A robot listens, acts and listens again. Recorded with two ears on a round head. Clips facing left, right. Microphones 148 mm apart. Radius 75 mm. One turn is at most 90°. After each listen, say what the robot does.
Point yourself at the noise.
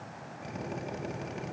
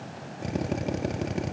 Turn 55° right.
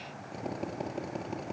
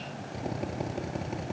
Found it: a drill, straight ahead.